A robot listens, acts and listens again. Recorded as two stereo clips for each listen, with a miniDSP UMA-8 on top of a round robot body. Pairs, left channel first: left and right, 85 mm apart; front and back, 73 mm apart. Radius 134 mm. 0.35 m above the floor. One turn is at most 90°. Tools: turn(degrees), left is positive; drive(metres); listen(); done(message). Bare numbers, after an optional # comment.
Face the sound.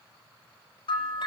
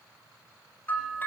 # The bell: 65° left.
turn(65)
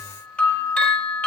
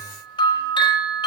# The bell is now 15° left.
turn(15)
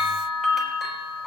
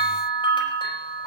done("Facing the bell.")